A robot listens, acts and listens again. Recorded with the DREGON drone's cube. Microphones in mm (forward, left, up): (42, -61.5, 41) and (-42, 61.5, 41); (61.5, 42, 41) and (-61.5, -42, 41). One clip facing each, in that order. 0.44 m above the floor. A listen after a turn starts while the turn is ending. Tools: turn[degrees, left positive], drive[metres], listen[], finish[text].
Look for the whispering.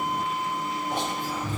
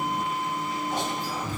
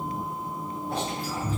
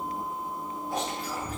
Thought: The whispering: 20° right.
Action: turn[-20]
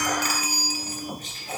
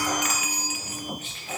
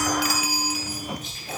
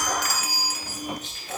Thought: The whispering is now 10° right.
Action: turn[-10]
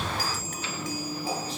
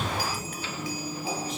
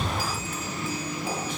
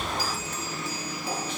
Action: listen[]
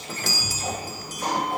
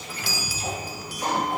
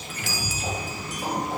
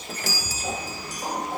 Action: listen[]
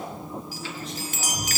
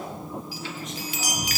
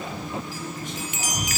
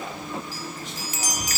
Action: finish[I heard whispering from this way, but can't make it out now.]